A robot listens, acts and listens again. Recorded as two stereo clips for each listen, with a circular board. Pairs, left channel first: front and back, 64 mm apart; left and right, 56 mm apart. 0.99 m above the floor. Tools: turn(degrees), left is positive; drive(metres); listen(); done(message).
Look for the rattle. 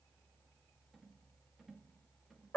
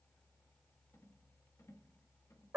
turn(degrees=95)
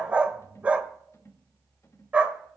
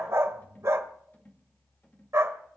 turn(degrees=35)
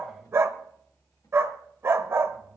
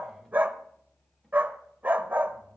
listen()
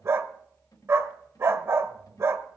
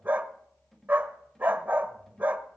done("Found it: a rattle, straight ahead, 2 to 4 m away.")